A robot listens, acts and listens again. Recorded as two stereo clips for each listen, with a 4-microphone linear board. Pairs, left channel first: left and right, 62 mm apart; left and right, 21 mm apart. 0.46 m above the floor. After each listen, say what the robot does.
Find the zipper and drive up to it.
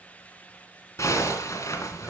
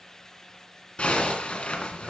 Turn 55° left.
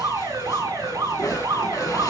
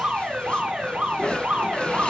Turn 70° left.
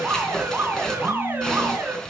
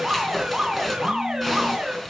Turn 10° left.
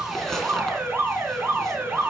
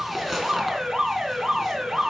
Drive 1.0 m forward.
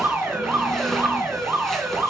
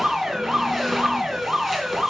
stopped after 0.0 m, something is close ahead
Keep listening.
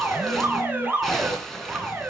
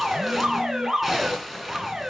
Something is in my way. I am facing the zipper but have not reached it.